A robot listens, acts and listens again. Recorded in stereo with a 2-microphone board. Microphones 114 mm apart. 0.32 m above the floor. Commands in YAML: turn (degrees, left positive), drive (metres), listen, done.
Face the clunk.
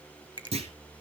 turn: -65
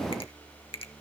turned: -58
listen: true
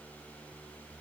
done: "I heard a clunk, but can't make it out now. It was about 10° right or 55° right."